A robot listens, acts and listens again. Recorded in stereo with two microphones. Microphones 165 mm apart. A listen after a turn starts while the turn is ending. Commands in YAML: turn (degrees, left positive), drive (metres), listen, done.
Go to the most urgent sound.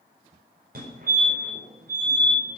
turn: -65
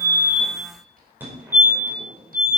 turn: -15
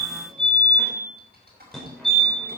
drive: 1.0
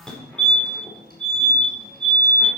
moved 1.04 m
drive: 1.0
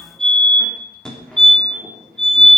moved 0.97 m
drive: 1.0
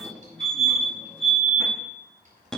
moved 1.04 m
drive: 1.0
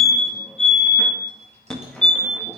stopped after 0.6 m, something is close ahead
turn: 10
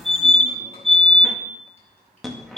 done: "Arrived at the fire alarm, straight ahead."